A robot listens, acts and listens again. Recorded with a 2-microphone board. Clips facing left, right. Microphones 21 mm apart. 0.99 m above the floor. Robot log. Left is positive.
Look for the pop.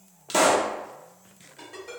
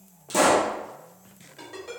note: The pop: about 45° left or 135° left.
cmd yaw +45
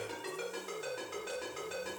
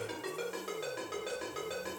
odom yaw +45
cmd idle
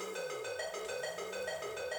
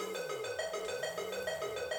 end: I heard a pop, but can't make it out now. It was about straight ahead or 90° left.